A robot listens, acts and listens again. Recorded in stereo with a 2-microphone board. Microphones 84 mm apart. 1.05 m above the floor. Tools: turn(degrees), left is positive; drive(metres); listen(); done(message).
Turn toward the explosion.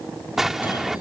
turn(degrees=-30)
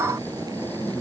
listen()
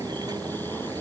done("I heard an explosion, but can't make it out now. It was about 25° left or 145° right.")